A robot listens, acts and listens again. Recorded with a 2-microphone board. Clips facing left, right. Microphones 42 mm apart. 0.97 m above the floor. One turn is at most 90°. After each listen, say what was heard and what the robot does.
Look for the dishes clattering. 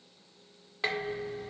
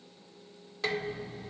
The dishes clattering: about 25° left or 155° left. Turn 25° left.
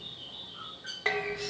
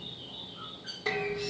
So it is at 130° left. Turn 90° left.
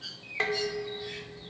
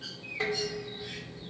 The dishes clattering is now 65° left. Turn 65° left.
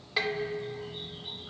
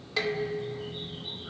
The dishes clattering is now 15° left. Turn 15° left.
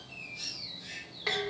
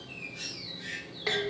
Found it: dishes clattering, straight ahead.